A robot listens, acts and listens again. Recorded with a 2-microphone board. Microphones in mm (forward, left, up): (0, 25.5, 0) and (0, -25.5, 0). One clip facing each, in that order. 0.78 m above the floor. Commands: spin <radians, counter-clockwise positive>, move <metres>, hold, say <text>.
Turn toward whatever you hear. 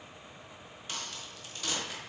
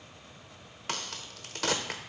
spin -1.57
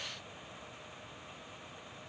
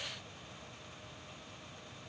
say Facing where the crack came from. I can't hear it now.